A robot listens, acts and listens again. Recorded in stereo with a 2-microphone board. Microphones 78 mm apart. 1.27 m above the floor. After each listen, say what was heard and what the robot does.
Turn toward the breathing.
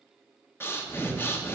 The breathing: about 30° left or 150° left. Turn 30° left.
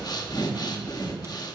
So it is at 125° left. Turn 125° left.
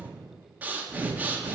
The breathing is now 20° right. Turn 20° right.
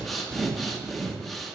Facing the breathing.